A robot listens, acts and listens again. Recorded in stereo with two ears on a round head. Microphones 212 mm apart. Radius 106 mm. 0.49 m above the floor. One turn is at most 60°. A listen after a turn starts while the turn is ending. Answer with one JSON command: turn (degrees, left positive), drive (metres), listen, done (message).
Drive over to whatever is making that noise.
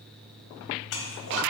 {"turn": 60}
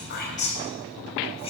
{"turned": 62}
{"turn": 30}
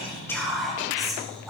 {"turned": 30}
{"drive": 1.0}
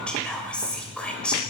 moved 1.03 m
{"drive": 1.0}
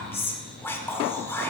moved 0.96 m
{"turn": 15}
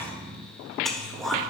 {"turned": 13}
{"drive": 1.0}
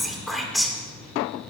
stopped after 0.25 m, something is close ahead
{"done": "Arrived at the whispering, straight ahead."}